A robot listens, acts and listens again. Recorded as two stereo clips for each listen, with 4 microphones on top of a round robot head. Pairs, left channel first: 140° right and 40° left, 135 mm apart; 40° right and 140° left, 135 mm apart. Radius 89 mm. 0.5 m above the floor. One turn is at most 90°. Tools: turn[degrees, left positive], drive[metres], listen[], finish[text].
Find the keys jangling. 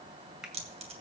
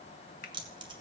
Thought: The keys jangling: 85° left.
Action: turn[85]
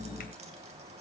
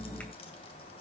Action: listen[]
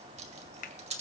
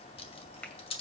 Action: finish[Facing the keys jangling.]